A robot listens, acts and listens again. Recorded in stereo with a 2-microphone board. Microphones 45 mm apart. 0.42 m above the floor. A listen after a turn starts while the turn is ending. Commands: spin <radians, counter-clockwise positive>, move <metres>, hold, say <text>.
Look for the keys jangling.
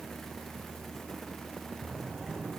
hold
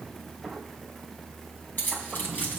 spin 0.87
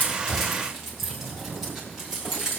spin -0.26
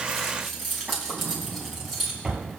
say Facing the keys jangling, 2 to 4 m away.